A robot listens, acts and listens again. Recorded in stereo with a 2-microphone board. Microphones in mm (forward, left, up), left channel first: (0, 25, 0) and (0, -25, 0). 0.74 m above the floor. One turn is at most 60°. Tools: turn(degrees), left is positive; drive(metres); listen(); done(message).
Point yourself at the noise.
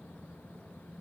listen()
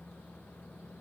listen()
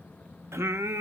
turn(degrees=-60)
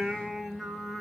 done("Facing the singing.")